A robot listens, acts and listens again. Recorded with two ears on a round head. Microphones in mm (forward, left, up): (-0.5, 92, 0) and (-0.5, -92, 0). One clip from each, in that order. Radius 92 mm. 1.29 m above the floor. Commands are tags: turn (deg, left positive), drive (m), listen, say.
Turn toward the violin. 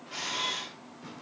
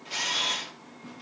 <listen/>
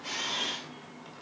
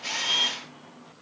<listen/>
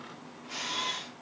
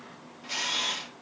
<say>I can't make out a violin, only a camera shutter and tearing paper.</say>